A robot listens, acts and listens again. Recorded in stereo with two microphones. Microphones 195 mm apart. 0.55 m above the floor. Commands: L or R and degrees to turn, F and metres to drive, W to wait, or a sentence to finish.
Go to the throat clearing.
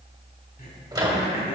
L45
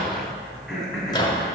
F1.0
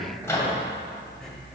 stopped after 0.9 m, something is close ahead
W
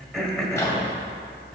Arrived at the throat clearing, straight ahead.